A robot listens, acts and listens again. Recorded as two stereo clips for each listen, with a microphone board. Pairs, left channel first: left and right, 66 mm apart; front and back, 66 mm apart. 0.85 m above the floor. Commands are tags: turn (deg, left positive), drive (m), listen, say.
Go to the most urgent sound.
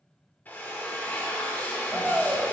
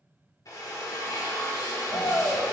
<drive m="1.0"/>
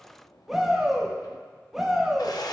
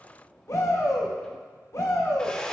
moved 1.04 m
<drive m="1.0"/>
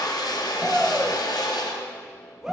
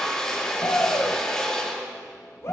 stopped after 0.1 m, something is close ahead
<turn deg="-10"/>
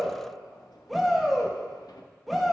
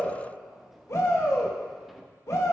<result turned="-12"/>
<say>Arrived at the shout, straight ahead.</say>